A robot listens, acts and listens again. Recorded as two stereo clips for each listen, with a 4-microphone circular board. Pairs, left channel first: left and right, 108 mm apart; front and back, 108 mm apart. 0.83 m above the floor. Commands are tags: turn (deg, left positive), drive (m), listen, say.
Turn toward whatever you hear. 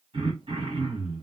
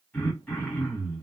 <turn deg="-80"/>
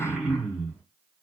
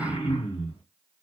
<say>Found it: throat clearing, straight ahead, 1 to 2 m away.</say>